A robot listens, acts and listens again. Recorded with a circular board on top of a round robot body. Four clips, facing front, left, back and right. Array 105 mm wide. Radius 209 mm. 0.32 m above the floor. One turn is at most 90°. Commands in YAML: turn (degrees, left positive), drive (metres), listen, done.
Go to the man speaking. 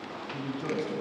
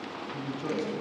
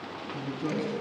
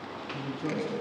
turn: 10
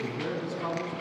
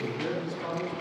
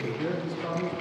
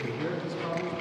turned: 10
drive: 1.0
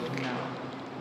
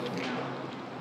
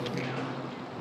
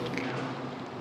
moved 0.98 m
drive: 1.0
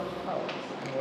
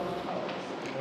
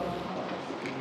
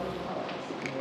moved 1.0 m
turn: 10
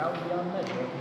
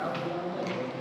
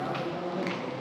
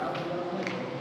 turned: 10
drive: 1.0
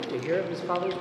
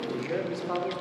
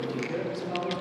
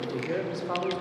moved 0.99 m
drive: 1.0
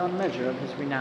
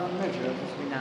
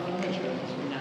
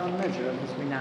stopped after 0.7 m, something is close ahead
turn: -10
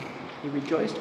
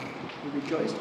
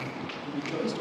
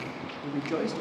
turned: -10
done: "I am next to the man speaking."